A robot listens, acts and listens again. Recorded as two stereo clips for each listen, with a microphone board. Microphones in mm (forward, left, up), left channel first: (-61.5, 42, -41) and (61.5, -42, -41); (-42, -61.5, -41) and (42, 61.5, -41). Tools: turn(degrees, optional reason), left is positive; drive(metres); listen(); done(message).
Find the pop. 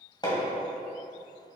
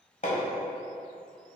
listen()
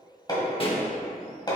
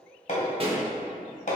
turn(degrees=100, reason="The pop: 100° left.")
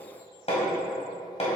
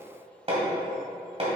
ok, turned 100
done("I heard a pop from this way, but can't make it out now.")